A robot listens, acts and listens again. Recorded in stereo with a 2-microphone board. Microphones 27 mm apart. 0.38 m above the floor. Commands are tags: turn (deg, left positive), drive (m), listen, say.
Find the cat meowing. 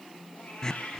<turn deg="90"/>
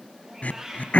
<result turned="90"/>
<turn deg="-10"/>
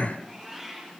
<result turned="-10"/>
<say>Found it: a cat meowing, straight ahead.</say>